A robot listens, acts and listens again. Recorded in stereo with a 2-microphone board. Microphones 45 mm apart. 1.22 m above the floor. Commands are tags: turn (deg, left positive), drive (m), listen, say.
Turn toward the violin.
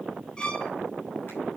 <turn deg="20"/>
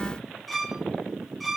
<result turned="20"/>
<say>Found it: a violin, straight ahead, 1 to 2 m away.</say>